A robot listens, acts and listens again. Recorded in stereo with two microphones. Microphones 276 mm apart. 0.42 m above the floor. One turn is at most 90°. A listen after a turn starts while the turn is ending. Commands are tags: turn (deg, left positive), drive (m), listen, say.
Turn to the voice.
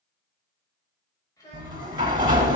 <turn deg="30"/>
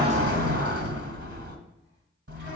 <listen/>
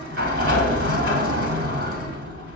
<listen/>
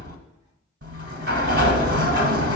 <say>I heard a child speaking, but can't make it out now. It was about 15° right or 135° left.</say>